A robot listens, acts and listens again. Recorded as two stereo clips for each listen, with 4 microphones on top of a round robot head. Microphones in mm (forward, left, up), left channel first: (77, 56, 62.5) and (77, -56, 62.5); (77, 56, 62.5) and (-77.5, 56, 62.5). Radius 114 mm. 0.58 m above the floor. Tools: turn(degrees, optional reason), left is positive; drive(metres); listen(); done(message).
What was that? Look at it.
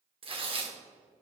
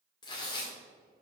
turn(degrees=-60, reason="The tearing paper: 60° right.")
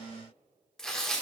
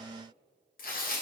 done("Facing the tearing paper.")